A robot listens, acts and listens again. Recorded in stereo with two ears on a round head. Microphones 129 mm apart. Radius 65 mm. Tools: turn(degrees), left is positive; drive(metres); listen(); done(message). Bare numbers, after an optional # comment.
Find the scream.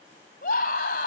# The scream: about 70° left or 110° left.
turn(70)
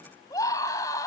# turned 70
# So it is at 25° left.
turn(25)
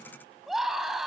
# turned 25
done("Found it: a scream, straight ahead, 2 to 4 m away.")